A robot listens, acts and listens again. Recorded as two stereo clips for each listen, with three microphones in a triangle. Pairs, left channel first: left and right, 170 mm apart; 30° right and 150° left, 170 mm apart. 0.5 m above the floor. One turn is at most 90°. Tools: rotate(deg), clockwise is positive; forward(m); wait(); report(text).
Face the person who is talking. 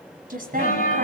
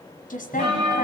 rotate(60)
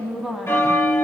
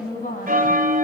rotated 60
report("Found it: a woman speaking, straight ahead, 2 to 4 m away.")